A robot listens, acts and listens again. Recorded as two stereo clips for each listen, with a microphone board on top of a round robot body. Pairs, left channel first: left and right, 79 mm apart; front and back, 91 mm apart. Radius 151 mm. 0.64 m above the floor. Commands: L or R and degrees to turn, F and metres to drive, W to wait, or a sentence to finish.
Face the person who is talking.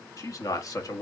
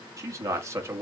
L125
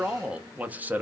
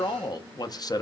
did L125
R30
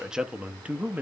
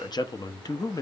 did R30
R30
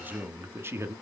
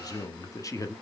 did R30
R45
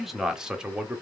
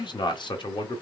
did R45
R15
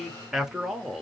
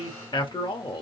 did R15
Facing the man speaking.